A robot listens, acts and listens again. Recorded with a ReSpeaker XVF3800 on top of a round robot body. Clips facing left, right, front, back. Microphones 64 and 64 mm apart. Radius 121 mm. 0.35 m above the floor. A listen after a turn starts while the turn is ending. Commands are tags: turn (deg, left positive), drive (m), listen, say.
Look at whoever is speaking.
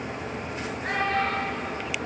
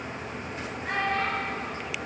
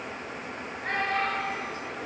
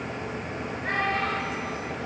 <turn deg="95"/>
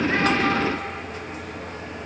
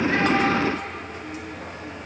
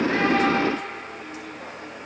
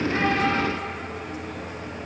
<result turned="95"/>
<listen/>
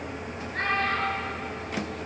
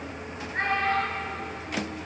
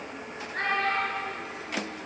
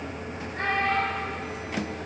<turn deg="-20"/>
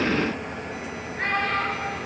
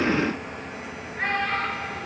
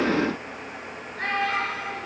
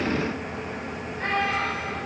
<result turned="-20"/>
<say>Facing the child speaking, over 4 m away.</say>